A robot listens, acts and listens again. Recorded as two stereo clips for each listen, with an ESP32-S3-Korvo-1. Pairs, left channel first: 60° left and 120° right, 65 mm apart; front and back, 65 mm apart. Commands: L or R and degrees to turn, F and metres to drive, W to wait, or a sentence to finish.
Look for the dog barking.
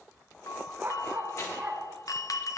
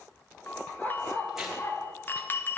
R50
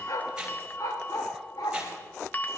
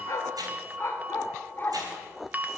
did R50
L60
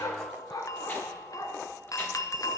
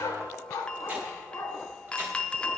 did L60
L45
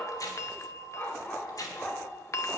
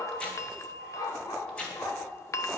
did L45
Facing the dog barking.